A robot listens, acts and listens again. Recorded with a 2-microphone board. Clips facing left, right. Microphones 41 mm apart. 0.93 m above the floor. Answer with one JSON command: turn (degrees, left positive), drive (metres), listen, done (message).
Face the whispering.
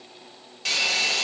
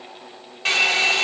{"listen": true}
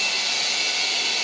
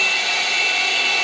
{"listen": true}
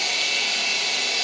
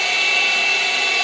{"done": "I can't make out whispering to turn to."}